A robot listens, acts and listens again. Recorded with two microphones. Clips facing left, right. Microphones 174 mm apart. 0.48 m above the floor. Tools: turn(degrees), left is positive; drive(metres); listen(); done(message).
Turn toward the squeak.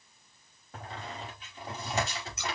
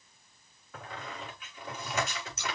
turn(degrees=30)
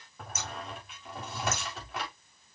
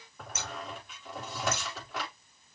done("Facing the squeak.")